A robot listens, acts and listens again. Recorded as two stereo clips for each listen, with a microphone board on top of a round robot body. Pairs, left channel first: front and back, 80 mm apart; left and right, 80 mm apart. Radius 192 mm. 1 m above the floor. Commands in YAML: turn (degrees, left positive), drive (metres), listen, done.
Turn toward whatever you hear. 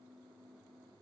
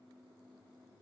listen: true
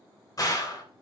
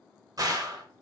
turn: -45
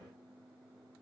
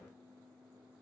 done: "Facing where the gunshot came from. I can't hear it now."